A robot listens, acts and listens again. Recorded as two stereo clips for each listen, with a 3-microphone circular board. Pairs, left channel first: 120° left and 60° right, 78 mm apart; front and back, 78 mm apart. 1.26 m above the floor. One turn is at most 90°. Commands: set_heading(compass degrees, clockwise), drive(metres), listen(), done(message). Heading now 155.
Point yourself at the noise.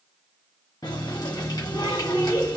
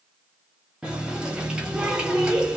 set_heading(65)
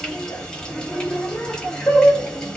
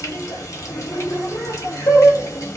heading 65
set_heading(25)
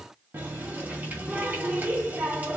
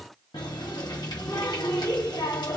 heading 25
done("Found it: a running tap, straight ahead, 1 to 2 m away.")